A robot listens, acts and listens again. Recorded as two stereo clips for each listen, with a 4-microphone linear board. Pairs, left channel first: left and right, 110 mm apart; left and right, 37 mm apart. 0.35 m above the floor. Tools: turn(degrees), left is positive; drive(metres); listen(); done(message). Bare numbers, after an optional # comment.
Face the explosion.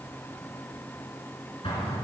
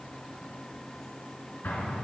# The explosion: about 55° left or 125° left.
turn(55)
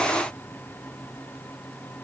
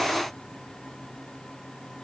listen()
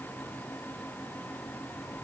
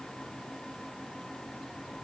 done("I heard an explosion, but can't make it out now. It was about straight ahead or 70° left.")